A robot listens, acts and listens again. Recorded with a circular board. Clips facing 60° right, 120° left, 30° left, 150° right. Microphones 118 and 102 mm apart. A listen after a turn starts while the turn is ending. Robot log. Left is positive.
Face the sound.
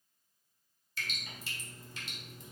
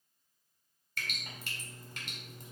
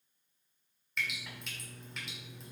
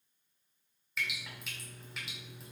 note: The dripping: 125° left.
cmd yaw +125
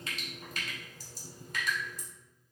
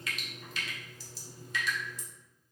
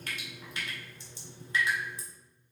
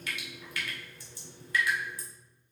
note: The dripping is now 30° right.
cmd yaw -30
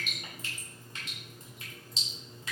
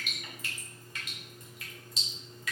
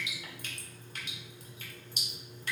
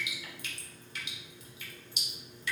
end: Facing the dripping.